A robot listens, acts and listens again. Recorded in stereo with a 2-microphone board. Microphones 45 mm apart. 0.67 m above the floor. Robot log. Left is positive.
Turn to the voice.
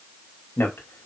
note: The man speaking: about 60° left or 120° left.
cmd yaw +60
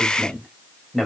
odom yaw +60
end: Found it: a man speaking, straight ahead, 2 to 4 m away.